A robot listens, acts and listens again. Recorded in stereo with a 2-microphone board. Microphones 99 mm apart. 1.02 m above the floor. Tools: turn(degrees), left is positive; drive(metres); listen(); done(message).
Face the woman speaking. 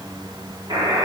listen()
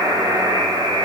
listen()
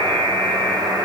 done("I can't make out a woman speaking to turn to.")